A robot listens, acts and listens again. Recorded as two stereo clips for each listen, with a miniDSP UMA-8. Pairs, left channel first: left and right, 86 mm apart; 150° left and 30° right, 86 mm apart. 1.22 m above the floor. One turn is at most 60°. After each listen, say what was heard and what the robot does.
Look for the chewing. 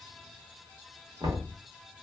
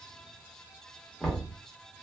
Keep listening.
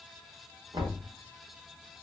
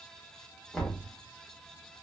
Keep listening.
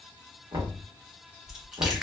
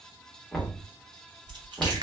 Found it: chewing, straight ahead.